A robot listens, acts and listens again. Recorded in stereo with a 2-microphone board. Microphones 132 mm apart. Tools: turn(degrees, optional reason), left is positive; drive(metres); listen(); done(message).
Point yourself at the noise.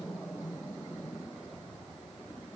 listen()
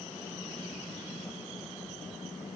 listen()
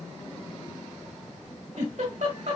turn(degrees=-90)
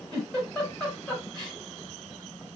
done("Facing the giggle.")